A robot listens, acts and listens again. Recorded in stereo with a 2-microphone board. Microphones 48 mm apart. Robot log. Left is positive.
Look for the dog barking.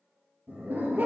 note: The dog barking: about 45° right or 135° right.
cmd yaw -45
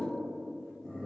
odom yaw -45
end: Found it: a dog barking, straight ahead, 2 to 4 m away.